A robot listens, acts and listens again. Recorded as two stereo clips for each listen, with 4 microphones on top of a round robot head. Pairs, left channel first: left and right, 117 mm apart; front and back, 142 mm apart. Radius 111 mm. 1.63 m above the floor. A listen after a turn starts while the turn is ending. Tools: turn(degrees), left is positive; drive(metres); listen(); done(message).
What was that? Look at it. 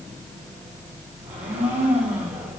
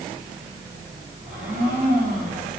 turn(degrees=-130)
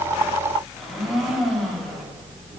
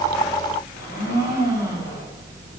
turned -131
done("Facing the blender.")